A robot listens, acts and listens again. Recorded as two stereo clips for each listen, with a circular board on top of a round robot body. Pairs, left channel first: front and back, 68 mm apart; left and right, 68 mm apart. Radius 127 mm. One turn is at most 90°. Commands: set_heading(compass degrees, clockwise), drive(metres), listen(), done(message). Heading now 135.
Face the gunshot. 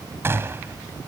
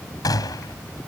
set_heading(45)
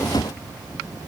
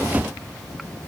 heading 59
set_heading(14)
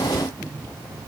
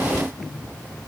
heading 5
done("I heard a gunshot from this way, but can't make it out now.")